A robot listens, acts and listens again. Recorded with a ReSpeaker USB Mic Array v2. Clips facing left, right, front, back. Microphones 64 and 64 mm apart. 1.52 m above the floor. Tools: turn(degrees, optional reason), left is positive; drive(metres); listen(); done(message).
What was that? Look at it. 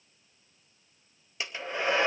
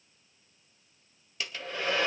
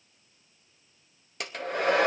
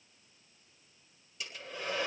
turn(degrees=20, reason="The hair dryer: 20° left.")
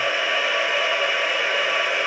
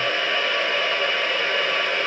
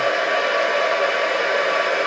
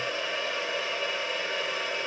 turn(degrees=10, reason="The hair dryer is now 10° left.")
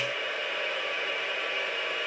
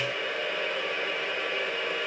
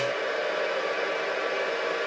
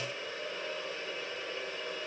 done("Facing the hair dryer, 1 to 2 m away.")